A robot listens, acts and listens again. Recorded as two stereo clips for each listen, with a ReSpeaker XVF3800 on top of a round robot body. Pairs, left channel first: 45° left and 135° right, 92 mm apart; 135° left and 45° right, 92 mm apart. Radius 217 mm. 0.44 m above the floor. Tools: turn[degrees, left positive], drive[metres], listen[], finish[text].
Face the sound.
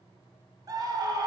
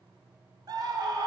Thought: The scream: 90° right.
Action: turn[-90]
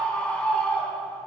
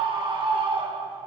Thought: The scream is now 30° right.
Action: turn[-30]
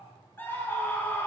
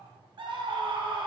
Thought: The scream is now 20° right.
Action: turn[-20]
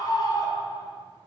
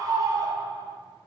Action: finish[Facing the scream.]